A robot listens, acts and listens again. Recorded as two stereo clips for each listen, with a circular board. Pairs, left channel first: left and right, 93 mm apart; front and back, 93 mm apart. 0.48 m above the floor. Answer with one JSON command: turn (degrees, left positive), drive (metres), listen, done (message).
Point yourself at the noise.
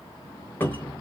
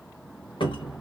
{"turn": 25}
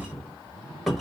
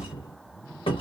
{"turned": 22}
{"done": "Found it: a cupboard door, straight ahead, 1 to 2 m away."}